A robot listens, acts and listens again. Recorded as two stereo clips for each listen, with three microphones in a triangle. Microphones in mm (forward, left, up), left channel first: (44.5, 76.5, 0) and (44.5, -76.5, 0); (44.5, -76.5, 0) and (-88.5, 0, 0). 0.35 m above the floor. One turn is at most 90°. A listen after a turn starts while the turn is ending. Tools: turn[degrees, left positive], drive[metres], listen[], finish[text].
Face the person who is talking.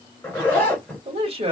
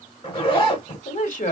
Thought: The man speaking: 45° right.
Action: turn[-45]
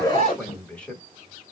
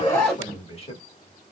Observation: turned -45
Thought: The man speaking is now 10° left.
Action: turn[10]
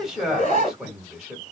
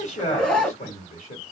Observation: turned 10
Action: finish[Found it: a man speaking, straight ahead, 1 to 2 m away.]